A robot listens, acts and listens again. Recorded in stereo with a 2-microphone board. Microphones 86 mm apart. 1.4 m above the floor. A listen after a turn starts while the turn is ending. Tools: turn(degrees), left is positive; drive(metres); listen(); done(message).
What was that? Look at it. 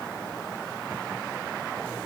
listen()
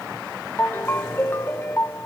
turn(degrees=25)
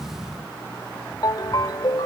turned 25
turn(degrees=125)
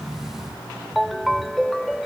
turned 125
done("Found it: a ringtone, straight ahead.")